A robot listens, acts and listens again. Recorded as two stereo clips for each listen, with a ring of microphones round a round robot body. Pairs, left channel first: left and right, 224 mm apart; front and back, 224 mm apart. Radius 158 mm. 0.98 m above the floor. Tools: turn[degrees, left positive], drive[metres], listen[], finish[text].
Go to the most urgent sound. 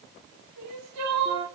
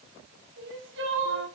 Thought: The crying: 120° right.
Action: turn[-120]
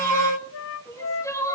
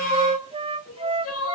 Thought: The crying is now 15° left.
Action: turn[15]
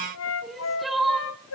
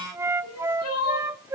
Action: drive[1.0]
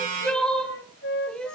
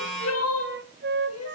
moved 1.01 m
Action: drive[1.0]
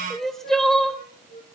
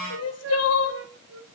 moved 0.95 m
Action: drive[1.0]
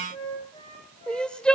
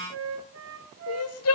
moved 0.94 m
Action: drive[1.0]
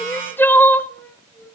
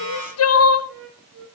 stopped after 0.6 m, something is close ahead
Thought: The crying is now 10° left.
Action: turn[10]
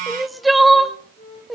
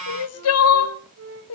Action: finish[Arrived at the crying, straight ahead.]